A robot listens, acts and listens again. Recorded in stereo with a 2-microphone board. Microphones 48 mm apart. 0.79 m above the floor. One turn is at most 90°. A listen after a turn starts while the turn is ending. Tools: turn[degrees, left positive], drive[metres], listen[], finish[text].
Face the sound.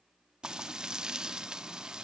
Thought: The frying: about 15° right or 165° right.
Action: turn[-15]
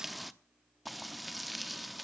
Action: finish[Found it: frying, straight ahead.]